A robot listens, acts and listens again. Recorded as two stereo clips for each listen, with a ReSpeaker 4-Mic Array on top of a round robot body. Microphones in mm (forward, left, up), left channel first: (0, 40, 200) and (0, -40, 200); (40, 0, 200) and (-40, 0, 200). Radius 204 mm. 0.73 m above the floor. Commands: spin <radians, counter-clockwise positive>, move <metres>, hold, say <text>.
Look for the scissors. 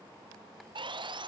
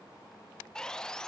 hold
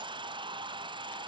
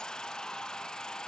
hold
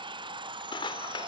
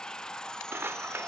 spin 2.01
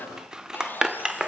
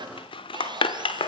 spin -0.17
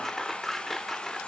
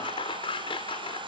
say Found it: scissors, straight ahead, under 1 m away.